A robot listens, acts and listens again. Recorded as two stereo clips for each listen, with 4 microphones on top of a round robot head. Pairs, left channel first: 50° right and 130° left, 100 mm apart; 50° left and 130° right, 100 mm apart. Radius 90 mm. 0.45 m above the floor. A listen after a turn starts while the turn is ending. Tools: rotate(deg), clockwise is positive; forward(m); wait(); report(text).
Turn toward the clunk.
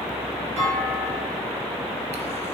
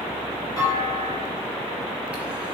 rotate(-110)
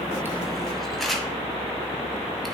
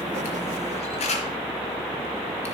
report("Facing where the clunk came from. I can't hear it now.")